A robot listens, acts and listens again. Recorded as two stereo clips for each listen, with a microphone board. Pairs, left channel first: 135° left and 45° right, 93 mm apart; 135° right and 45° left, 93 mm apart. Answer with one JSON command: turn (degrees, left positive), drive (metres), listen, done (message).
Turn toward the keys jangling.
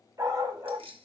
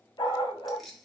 {"turn": -45}
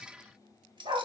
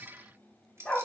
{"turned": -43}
{"turn": -15}
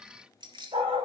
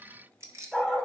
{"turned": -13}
{"turn": -15}
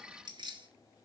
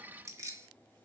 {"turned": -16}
{"turn": -15}
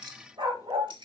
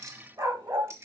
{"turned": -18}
{"turn": -15}
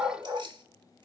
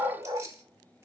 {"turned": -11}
{"turn": -15}
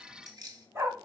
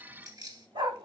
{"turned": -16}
{"done": "Facing the keys jangling."}